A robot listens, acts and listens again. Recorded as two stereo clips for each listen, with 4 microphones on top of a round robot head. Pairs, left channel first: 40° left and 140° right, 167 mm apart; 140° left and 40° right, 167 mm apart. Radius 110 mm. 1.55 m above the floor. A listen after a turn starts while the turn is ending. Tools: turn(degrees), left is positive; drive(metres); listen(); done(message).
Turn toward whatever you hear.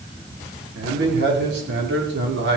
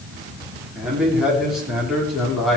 turn(degrees=-130)
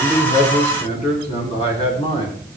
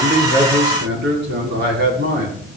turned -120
turn(degrees=-20)
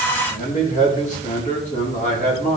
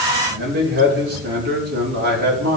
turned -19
turn(degrees=-10)
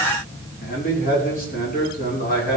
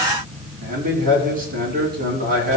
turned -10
done("Found it: a man speaking, straight ahead.")